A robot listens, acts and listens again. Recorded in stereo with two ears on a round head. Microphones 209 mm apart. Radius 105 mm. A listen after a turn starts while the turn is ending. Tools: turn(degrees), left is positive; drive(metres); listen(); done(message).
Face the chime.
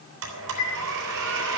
turn(degrees=75)
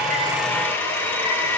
listen()
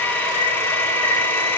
listen()
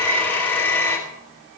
done("I heard a chime, but can't make it out now. It was about straight ahead or 30° left.")